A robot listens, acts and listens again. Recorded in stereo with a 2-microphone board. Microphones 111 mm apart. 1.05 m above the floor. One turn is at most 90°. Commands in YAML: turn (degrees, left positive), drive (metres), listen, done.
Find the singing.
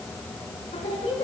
turn: 90
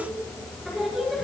done: "Facing the singing."